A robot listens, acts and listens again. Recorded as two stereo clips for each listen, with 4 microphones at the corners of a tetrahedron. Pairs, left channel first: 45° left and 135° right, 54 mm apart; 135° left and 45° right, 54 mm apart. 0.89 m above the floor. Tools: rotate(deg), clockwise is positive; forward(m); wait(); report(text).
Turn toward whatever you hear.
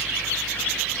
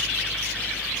wait()
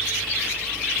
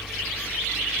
wait()
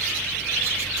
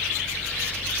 report("I can't make out anything to turn to.")